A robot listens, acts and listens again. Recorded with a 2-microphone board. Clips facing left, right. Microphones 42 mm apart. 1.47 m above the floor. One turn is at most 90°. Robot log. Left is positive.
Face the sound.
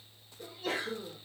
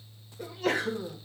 cmd yaw -90
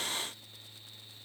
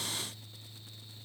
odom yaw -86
end: I heard a sneeze from this way, but can't make it out now.